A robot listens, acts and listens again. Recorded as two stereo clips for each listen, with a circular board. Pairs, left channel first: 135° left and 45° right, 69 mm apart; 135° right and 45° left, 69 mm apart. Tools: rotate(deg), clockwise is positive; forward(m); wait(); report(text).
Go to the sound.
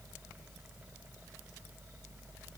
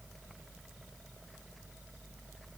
wait()
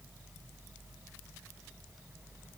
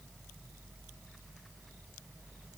wait()
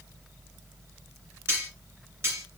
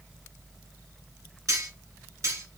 rotate(-10)
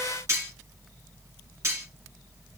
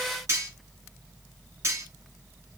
forward(1.0)
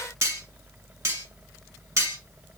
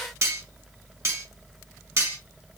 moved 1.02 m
forward(1.0)
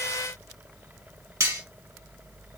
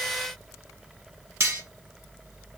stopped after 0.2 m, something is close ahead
report("I am next to the cutlery clinking.")